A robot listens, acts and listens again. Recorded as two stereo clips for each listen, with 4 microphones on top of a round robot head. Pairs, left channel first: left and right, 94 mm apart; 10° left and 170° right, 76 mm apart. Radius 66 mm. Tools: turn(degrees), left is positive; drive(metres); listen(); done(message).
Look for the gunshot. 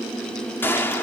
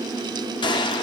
turn(degrees=20)
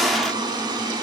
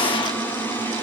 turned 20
done("Facing the gunshot, under 1 m away.")